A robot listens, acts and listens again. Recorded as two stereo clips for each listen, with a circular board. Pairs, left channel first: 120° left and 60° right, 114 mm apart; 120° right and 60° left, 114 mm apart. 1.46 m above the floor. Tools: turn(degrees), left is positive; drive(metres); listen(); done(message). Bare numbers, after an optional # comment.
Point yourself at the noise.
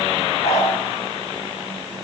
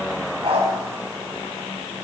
# The dog barking: 100° left.
turn(100)
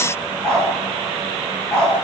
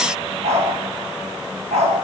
# The dog barking is now 35° left.
turn(35)
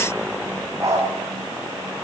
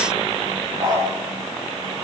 done("Facing the dog barking, over 4 m away.")